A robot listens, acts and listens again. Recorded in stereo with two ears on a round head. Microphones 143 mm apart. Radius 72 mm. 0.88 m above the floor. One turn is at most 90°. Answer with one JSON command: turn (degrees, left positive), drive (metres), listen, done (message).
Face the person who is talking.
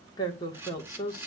{"turn": 25}
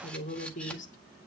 {"turn": 90}
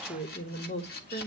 {"turn": 40}
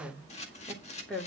{"done": "Facing the woman speaking, 2 to 4 m away."}